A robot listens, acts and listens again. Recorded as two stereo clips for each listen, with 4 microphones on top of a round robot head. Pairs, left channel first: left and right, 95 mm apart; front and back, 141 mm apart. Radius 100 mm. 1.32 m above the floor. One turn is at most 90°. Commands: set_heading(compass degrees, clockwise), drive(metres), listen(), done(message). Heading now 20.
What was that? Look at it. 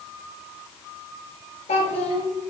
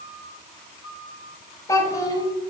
set_heading(320)
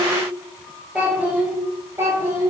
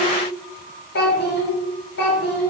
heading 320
set_heading(340)
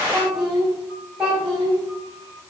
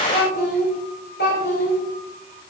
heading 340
set_heading(350)
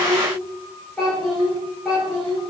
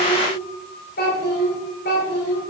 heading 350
done("Facing the child speaking, 2 to 4 m away.")